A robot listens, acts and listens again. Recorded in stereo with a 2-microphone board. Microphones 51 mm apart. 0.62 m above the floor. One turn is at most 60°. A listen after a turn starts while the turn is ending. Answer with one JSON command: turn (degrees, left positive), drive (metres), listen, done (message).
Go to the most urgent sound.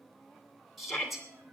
{"turn": 30}
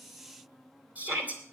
{"turn": -30}
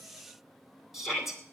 {"drive": 1.0}
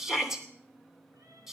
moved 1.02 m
{"turn": -10}
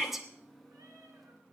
{"drive": 1.0}
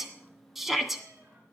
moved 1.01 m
{"drive": 1.0}
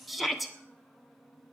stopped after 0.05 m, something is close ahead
{"done": "Arrived at the shout, straight ahead."}